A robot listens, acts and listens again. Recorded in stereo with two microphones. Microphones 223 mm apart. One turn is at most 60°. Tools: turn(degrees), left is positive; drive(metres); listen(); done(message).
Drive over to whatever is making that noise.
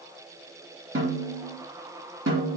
turn(degrees=-60)
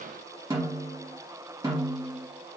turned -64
turn(degrees=-15)
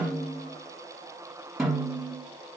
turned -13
drive(metres=1.0)
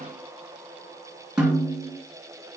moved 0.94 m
drive(metres=1.0)
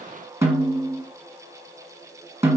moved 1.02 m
turn(degrees=-10)
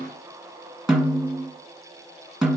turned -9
drive(metres=1.0)
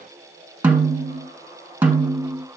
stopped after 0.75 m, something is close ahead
done("Arrived at the snare drum, straight ahead.")